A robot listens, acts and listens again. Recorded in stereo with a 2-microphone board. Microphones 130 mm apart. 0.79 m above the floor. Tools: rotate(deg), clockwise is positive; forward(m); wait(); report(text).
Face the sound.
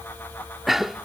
rotate(30)
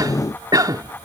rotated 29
rotate(150)
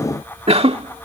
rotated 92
rotate(55)
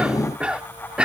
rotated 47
rotate(10)
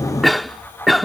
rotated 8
report("Found it: a cough, straight ahead.")